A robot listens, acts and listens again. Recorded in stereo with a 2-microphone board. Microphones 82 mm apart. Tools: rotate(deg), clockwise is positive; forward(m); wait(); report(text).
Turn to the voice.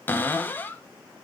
wait()
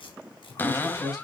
rotate(-40)
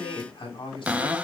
rotate(-100)
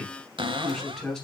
rotate(-10)
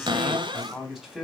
report("Found it: a man speaking, straight ahead, 2 to 4 m away.")